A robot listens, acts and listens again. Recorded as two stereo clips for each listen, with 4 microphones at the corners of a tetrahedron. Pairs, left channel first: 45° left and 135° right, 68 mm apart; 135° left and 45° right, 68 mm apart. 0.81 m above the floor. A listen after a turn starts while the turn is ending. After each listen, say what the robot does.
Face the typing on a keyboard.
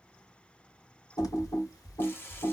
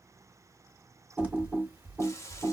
Turn 20° left.
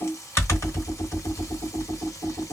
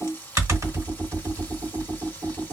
Found it: typing on a keyboard, straight ahead, 1 to 2 m away.